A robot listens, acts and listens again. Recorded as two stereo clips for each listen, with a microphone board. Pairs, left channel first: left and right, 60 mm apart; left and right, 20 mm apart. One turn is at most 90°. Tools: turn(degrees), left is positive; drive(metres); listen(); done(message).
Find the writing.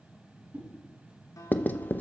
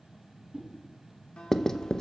turn(degrees=30)
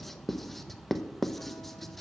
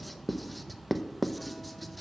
done("Facing the writing, under 1 m away.")